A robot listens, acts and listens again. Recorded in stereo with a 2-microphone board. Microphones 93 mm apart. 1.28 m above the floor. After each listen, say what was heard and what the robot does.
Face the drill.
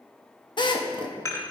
The drill: about 55° left or 125° left. Turn 55° left.
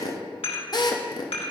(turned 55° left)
So it is at 55° left. Turn 55° left.
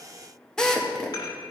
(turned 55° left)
The drill is now 10° left. Turn 10° left.
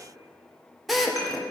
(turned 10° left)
Found it: a drill, straight ahead, under 1 m away.